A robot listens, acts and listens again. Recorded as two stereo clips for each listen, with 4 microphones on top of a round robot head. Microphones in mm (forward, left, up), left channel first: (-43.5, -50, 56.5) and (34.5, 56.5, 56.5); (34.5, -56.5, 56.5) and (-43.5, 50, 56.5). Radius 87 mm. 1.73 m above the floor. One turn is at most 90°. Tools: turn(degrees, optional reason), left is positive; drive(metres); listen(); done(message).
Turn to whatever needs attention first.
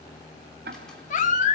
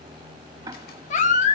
turn(degrees=-90, reason="The baby crying: 90° right.")
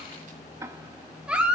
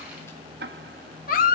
turn(degrees=-30, reason="The baby crying is now 30° right.")
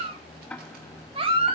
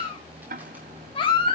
done("Found it: a baby crying, straight ahead.")